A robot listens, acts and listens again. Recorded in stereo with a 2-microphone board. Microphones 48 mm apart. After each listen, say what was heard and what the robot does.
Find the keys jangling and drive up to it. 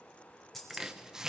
Turn 30° left.
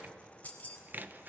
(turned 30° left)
So it is at 145° left. Turn 145° left.
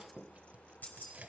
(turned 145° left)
The keys jangling is now 40° left. Turn 40° left.
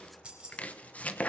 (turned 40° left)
The keys jangling is now 20° right. Turn 20° right.
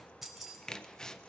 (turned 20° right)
Drive 1.0 m forward.
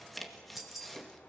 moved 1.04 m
Drive 1.0 m forward.
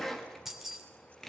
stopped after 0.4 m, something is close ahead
Blocked. The keys jangling is further on, straight ahead.